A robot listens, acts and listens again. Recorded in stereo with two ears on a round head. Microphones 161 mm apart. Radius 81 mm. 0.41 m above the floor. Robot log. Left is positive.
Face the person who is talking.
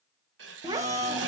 note: The child speaking: about 20° right or 160° right.
cmd yaw -20
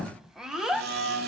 end: Facing the child speaking, 1 to 2 m away.